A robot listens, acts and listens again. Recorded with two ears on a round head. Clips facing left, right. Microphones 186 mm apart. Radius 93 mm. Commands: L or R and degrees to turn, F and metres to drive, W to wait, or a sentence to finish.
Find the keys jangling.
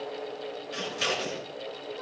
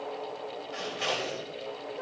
W
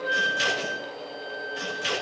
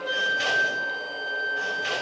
W
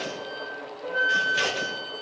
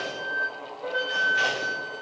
I can't make out keys jangling, only scissors and a flute.